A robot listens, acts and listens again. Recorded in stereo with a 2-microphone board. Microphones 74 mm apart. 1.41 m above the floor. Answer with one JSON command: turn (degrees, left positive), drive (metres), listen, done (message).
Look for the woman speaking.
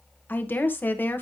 {"turn": 30}
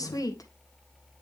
{"turn": 120}
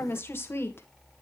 {"turn": 30}
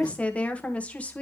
{"turn": 20}
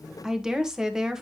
{"turn": -10}
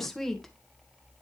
{"done": "Found it: a woman speaking, straight ahead."}